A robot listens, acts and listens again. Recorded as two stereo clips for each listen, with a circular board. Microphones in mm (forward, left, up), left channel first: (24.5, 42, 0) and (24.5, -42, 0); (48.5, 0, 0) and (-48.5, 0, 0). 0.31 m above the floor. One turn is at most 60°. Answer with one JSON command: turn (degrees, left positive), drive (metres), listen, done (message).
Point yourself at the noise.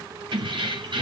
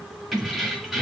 {"turn": -60}
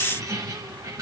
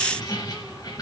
{"turn": -45}
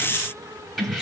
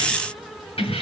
{"done": "Facing the keys jangling."}